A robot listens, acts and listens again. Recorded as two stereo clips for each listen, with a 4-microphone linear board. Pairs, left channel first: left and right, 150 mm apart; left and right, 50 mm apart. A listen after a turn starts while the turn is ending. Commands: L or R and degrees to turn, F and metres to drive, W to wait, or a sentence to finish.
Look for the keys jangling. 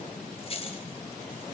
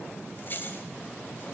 L40
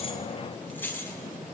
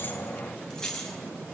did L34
L15
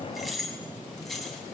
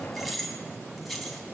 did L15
Facing the keys jangling.